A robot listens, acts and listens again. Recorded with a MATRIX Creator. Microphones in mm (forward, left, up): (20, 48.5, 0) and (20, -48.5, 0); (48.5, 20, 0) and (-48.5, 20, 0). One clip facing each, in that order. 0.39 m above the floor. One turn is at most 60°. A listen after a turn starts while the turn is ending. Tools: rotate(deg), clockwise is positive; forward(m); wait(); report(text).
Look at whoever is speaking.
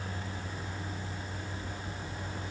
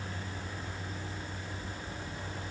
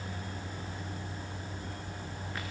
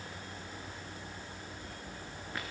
wait()
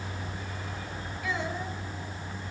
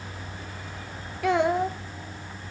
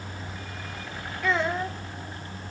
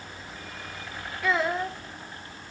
rotate(60)
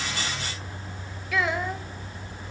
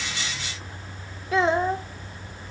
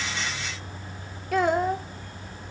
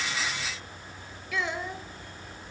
rotate(35)
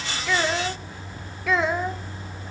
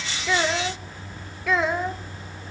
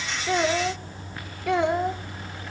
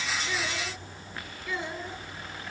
report("Facing the child speaking, under 1 m away.")